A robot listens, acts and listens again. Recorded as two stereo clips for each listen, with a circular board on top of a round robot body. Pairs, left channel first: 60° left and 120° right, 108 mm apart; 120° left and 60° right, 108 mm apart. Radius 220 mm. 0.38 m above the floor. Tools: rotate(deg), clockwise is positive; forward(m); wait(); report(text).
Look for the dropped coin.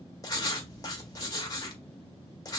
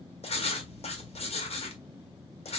wait()
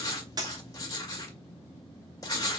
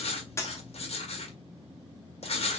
rotate(175)
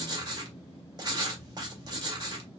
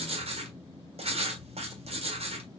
report("I heard a dropped coin from this way, but can't make it out now.")